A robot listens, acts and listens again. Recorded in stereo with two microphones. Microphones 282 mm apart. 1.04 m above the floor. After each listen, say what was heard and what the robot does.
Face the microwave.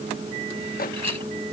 The microwave: about 30° left or 150° left. Turn 30° left.
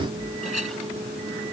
Keep listening.
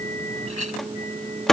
Found it: a microwave, straight ahead.